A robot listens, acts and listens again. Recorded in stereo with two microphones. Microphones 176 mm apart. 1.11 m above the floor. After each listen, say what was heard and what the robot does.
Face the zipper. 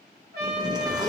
The zipper: about 25° right or 155° right. Turn 25° right.
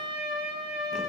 Keep listening.
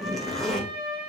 Found it: a zipper, straight ahead, under 1 m away.